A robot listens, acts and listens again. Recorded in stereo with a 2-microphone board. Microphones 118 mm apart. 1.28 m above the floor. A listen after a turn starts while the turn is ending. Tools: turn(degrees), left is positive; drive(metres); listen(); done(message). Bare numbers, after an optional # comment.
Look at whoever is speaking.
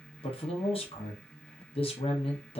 # The man speaking: about 50° left or 130° left.
turn(50)
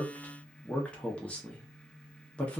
# So it is at 10° left.
turn(10)
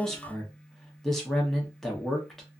done("Facing the man speaking.")